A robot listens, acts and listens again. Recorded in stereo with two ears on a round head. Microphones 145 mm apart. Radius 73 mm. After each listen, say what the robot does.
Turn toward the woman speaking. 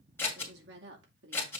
Turn 90° right.
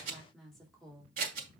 Found it: a woman speaking, straight ahead, 2 to 4 m away.